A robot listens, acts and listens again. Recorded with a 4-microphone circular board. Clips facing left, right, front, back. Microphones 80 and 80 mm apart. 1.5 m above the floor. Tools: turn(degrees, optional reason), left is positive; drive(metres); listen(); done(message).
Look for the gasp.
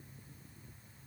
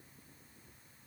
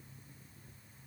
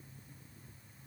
listen()
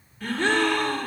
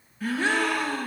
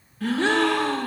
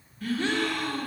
turn(degrees=-10, reason="The gasp: 10° right.")
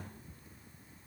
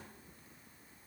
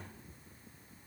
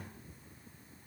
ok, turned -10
done("Facing where the gasp came from. I can't hear it now.")